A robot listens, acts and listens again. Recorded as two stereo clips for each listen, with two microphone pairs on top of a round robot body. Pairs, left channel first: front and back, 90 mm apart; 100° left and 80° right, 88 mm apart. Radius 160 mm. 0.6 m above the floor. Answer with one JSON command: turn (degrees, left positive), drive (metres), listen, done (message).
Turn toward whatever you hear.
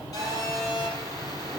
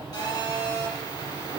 {"turn": 55}
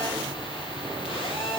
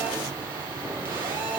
{"turn": -15}
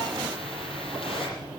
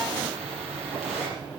{"listen": true}
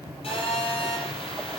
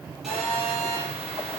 {"done": "Facing the phone buzzing."}